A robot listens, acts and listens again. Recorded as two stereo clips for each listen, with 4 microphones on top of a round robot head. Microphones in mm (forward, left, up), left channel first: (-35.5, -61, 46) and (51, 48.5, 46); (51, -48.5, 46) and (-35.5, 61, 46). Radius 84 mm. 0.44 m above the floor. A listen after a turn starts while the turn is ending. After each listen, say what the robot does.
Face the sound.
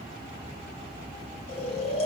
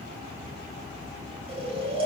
Turn 180° left.
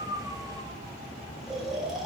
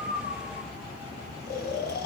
Turn 35° right.
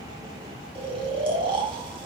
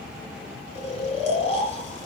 Facing the snoring.